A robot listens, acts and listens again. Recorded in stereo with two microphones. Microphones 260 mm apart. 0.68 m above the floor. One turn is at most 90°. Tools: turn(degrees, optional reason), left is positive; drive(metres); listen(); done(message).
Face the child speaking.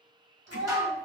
turn(degrees=-75, reason="The child speaking: about 75° right or 105° right.")
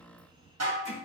listen()
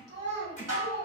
turn(degrees=-30, reason="So it is at 30° right.")
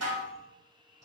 listen()
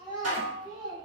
turn(degrees=-20, reason="The child speaking is now 20° right.")
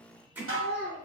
done("Found it: a child speaking, straight ahead, over 4 m away.")